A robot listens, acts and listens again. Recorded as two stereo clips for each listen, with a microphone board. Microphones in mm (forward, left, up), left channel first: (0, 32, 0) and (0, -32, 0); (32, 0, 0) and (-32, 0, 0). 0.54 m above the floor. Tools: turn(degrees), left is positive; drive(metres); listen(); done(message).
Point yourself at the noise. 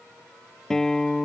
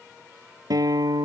turn(degrees=170)
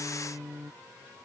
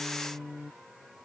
turn(degrees=-15)
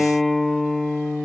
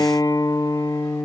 done("Facing the guitar.")